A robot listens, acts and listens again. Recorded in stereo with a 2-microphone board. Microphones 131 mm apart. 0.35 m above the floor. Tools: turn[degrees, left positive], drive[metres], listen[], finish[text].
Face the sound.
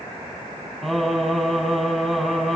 Action: turn[30]
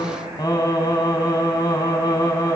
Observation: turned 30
Thought: So it is at 150° left.
Action: turn[150]
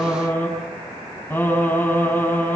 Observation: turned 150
Thought: The singing is now 20° left.
Action: turn[20]
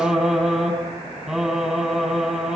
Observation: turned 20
Action: finish[Facing the singing.]